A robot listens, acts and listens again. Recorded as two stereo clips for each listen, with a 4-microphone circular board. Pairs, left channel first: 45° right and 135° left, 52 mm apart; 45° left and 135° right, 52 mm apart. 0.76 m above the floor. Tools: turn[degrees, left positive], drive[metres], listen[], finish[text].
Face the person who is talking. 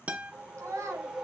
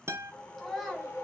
Thought: The child speaking: 120° left.
Action: turn[120]
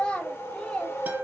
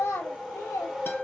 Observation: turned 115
Thought: The child speaking is now 20° left.
Action: turn[20]
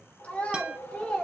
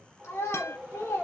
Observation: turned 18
Thought: The child speaking is now 25° left.
Action: turn[25]
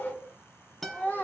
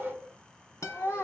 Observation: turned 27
Thought: The child speaking is now 15° left.
Action: turn[15]
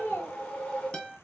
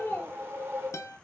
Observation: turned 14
Action: finish[Facing the child speaking, 1 to 2 m away.]